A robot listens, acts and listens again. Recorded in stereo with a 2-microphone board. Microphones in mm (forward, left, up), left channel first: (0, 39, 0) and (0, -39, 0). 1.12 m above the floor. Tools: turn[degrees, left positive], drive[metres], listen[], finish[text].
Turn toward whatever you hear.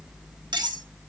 Thought: The cutlery clinking: about 65° right or 115° right.
Action: turn[-65]
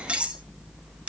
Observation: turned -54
Thought: So it is at 15° right.
Action: turn[-15]
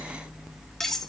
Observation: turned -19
Action: finish[Found it: cutlery clinking, straight ahead.]